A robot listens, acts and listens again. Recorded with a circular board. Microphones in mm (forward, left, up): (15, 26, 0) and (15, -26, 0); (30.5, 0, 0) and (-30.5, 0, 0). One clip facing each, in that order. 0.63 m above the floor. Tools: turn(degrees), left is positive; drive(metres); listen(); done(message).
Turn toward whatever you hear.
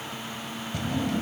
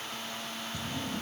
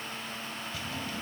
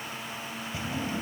turn(degrees=110)
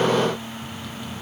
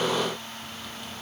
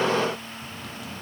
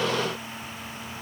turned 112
listen()
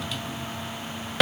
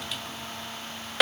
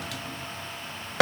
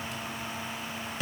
done("Facing the drawer.")